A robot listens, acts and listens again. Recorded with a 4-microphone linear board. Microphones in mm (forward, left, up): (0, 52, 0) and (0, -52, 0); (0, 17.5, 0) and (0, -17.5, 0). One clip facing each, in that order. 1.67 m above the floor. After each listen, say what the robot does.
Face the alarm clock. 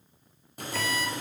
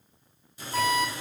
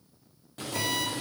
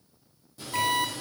Turn 55° right.
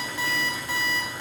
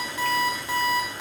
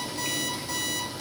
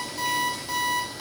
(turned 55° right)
Turn 20° right.
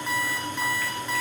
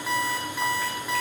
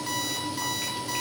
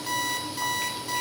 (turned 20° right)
Facing the alarm clock.